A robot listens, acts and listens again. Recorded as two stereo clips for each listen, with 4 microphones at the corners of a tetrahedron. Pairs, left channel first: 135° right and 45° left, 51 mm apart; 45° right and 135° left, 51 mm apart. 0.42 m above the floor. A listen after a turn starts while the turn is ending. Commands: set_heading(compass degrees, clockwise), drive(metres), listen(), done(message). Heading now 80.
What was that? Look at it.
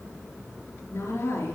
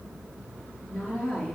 set_heading(180)
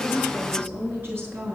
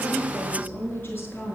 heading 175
done("Facing the woman speaking.")